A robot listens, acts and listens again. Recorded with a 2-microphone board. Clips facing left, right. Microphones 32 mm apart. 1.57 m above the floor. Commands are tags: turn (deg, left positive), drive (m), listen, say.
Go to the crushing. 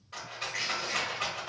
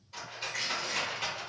<turn deg="25"/>
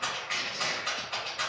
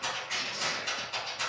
<turn deg="125"/>
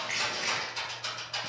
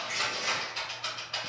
<turn deg="40"/>
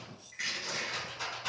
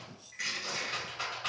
<drive m="1.0"/>
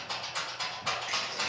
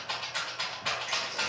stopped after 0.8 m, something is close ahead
<listen/>
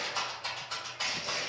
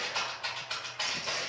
<turn deg="15"/>
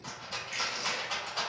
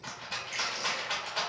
<say>Arrived at the crushing, straight ahead.</say>